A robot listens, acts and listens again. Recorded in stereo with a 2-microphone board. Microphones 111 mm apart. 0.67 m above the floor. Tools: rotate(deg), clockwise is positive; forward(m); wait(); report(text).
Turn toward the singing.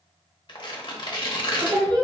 rotate(35)
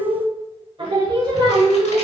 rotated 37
rotate(35)
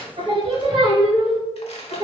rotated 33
rotate(40)
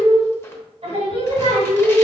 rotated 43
rotate(105)
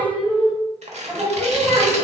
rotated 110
report("Found it: singing, straight ahead.")